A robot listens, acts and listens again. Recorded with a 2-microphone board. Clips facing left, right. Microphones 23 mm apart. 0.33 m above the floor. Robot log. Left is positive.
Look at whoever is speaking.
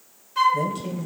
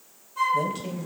cmd yaw -30
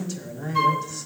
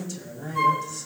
note: So it is at 15° left.
cmd yaw +15
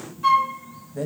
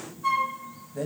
end: Facing the man speaking.